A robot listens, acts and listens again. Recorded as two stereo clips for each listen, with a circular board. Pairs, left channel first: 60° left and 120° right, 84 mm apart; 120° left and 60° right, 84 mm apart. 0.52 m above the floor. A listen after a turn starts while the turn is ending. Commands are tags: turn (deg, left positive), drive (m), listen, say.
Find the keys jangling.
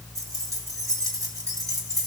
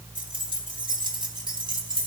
<turn deg="-75"/>
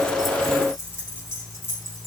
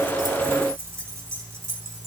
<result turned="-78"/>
<say>Found it: keys jangling, straight ahead.</say>